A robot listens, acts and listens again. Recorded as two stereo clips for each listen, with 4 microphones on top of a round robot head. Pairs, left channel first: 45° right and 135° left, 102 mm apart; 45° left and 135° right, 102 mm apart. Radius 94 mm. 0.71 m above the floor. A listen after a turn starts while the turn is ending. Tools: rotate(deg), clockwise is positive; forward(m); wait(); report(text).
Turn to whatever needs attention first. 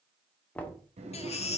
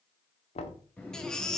rotate(40)
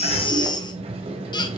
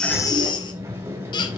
report("Found it: a baby crying, straight ahead.")